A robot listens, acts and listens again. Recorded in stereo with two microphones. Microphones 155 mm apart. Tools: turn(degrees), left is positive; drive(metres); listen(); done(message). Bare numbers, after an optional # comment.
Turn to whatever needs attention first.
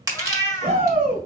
# The shout: about 65° right or 115° right.
turn(-65)
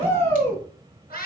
# So it is at 40° right.
turn(-40)
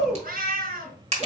done("Facing the shout.")